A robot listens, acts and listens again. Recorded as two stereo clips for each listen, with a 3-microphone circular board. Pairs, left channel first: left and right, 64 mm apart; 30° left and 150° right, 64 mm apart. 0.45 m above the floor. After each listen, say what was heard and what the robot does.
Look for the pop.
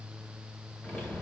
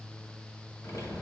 Keep listening.
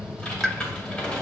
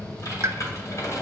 The pop: 175° left. Turn 175° left.
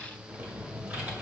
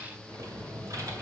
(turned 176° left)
Facing where the pop came from. I can't hear it now.